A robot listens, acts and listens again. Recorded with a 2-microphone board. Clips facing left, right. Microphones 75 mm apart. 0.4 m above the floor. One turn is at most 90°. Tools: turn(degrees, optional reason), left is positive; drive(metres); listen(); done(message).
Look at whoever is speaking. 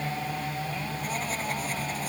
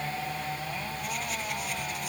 listen()
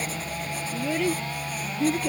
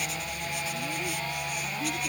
turn(degrees=70, reason="The child speaking: about 70° left or 110° left.")
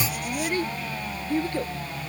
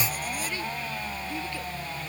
turn(degrees=45, reason="So it is at 45° left.")
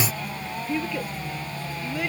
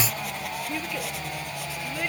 done("Found it: a child speaking, straight ahead.")